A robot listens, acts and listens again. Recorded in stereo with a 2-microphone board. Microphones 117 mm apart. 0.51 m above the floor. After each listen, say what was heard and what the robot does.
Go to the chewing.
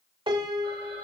Keep listening.
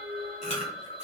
Turn 90° left.
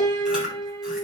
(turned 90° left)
Drive 1.0 m forward.
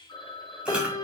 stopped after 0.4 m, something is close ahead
Keep listening.
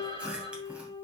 The chewing is now 10° right. Turn 10° right.
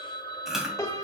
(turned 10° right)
Blocked. The chewing is further on, straight ahead.